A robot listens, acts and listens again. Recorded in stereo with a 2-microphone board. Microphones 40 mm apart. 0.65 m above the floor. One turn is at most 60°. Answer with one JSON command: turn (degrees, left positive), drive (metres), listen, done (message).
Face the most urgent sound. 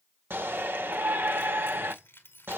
{"turn": -60}
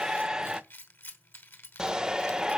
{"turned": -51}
{"turn": -20}
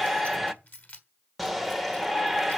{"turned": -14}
{"done": "Facing the shout."}